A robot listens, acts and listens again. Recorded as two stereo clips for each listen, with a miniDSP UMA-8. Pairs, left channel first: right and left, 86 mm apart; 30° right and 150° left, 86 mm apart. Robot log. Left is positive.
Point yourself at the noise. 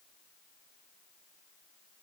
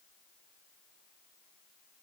cmd idle
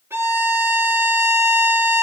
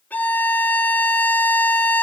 note: The violin: 35° left.
cmd yaw +35
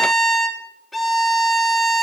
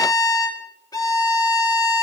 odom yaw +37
end: Found it: a violin, straight ahead, 1 to 2 m away.